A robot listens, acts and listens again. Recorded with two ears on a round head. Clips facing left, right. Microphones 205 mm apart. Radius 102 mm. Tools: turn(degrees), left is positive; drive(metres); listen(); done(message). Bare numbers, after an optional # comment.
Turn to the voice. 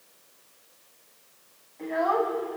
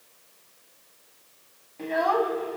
# The child speaking: about 50° right or 130° right.
turn(-50)
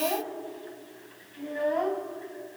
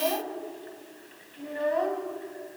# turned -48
done("Facing the child speaking.")